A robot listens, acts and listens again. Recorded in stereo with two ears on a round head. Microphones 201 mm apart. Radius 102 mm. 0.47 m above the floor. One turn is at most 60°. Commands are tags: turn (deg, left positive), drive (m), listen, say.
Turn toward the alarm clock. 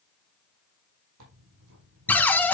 <listen/>
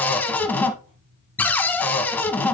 <listen/>
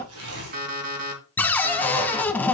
<turn deg="-40"/>
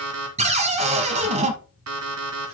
<turn deg="-60"/>
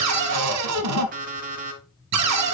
<turn deg="-40"/>
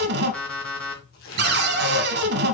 <say>Facing the alarm clock.</say>